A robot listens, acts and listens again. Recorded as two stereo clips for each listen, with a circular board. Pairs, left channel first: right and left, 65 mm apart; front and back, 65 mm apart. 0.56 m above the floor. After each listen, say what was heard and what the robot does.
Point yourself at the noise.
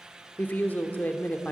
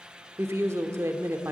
The woman speaking: 145° right. Turn 145° right.
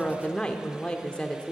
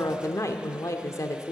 The woman speaking is now 15° right. Turn 15° right.
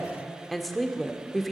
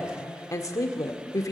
Found it: a woman speaking, straight ahead, 1 to 2 m away.